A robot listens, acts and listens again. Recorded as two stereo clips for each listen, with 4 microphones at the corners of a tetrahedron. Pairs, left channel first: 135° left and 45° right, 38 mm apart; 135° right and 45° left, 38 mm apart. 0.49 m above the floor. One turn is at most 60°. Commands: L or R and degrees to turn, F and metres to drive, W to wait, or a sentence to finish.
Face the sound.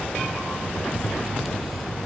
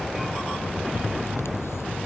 W
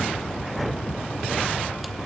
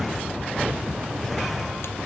W
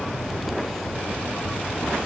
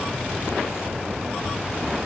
I can't make out anything.